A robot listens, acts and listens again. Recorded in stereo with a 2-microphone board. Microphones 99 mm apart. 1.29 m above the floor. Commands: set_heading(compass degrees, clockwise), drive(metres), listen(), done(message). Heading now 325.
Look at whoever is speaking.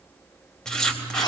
listen()
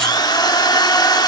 listen()
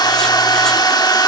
done("I can't make out anyone speaking to turn to.")